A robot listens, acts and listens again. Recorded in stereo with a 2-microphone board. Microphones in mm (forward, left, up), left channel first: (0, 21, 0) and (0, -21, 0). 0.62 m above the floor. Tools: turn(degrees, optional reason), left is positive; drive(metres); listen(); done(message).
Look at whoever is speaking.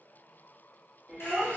turn(degrees=15, reason="The child speaking: about 15° left or 165° left.")
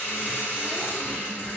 listen()
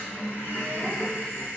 listen()
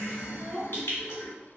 turn(degrees=150, reason="So it is at 150° left.")
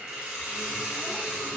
listen()
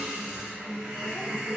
listen()
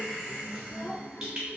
turn(degrees=30, reason="The child speaking is now 30° left.")
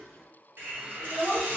done("Found it: a child speaking, straight ahead.")